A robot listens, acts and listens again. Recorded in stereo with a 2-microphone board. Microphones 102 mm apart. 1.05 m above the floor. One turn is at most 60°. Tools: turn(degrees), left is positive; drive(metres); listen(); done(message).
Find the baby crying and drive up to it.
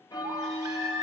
turn(degrees=-35)
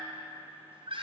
turn(degrees=-60)
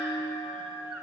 turn(degrees=-60)
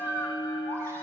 turn(degrees=-30)
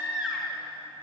turn(degrees=-10)
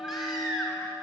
drive(metres=1.0)
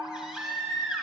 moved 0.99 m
turn(degrees=-10)
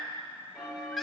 drive(metres=1.0)
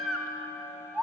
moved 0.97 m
drive(metres=1.0)
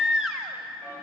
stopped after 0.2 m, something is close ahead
done("I am next to the baby crying.")